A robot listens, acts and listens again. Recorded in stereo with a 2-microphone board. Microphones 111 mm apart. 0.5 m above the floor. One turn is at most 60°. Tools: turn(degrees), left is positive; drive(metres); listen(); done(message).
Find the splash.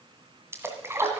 turn(degrees=-20)
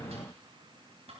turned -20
listen()
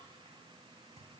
done("I heard a splash, but can't make it out now. It was about straight ahead or 140° right.")